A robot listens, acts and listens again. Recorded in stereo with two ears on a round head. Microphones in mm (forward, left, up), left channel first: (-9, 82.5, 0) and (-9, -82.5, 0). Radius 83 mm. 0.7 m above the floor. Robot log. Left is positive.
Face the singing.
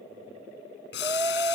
note: The singing: about 15° right or 165° right.
cmd yaw -15
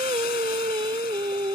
note: The singing: about 25° right or 155° right.
cmd yaw -25
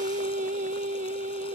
note: So it is at 135° right.
cmd yaw -135
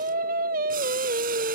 note: The singing is now 55° right.
cmd yaw -55
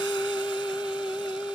end: Facing the singing.